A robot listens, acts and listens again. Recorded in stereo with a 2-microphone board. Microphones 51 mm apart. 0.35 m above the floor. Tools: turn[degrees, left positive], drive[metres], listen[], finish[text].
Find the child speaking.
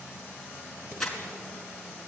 Action: listen[]
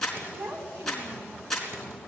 Thought: The child speaking: about 75° right or 105° right.
Action: turn[-75]
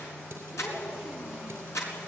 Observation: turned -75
Action: listen[]
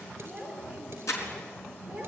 Thought: So it is at 15° right.
Action: turn[-15]
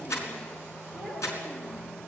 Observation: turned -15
Action: finish[Found it: a child speaking, straight ahead, over 4 m away.]